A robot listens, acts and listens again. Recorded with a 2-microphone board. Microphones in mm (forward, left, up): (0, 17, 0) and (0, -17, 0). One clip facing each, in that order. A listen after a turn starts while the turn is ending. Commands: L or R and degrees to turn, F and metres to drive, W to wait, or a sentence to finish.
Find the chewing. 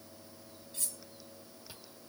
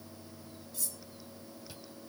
L30
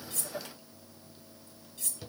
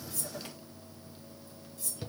R15
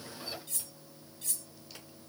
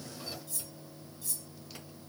W
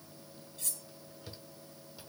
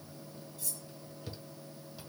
Found it: chewing, straight ahead.